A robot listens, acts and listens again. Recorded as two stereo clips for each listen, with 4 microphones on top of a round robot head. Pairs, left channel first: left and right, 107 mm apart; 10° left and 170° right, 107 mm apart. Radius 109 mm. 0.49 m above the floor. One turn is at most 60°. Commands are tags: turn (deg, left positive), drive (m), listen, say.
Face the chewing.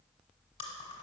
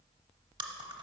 <turn deg="60"/>
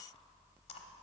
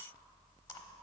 <turn deg="60"/>
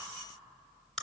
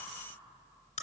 <say>Found it: chewing, straight ahead, under 1 m away.</say>